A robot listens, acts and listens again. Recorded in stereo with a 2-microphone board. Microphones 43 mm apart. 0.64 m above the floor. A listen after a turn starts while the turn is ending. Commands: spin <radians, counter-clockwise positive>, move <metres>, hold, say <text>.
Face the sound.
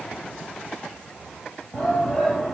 spin 0.52
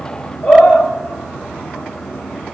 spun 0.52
spin 2.44
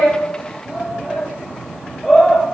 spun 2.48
say Facing the shout, 2 to 4 m away.